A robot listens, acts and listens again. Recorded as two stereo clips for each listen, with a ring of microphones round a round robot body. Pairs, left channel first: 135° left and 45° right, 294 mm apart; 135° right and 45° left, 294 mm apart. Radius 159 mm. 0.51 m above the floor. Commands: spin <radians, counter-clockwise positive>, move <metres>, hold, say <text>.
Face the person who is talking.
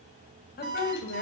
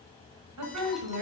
spin 1.40
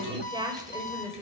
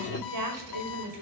spin 0.61
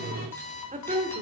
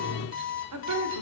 spin 0.44
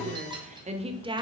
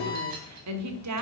spin 0.52
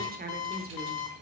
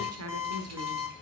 spin 0.17
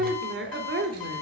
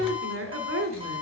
say Found it: a woman speaking, straight ahead, 1 to 2 m away.